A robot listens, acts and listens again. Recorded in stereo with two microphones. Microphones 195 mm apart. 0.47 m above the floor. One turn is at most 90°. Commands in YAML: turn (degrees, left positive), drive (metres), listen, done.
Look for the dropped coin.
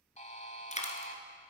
turn: 35
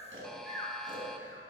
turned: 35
listen: true
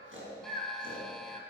done: "I heard a dropped coin, but can't make it out now. It was about straight ahead or 110° left."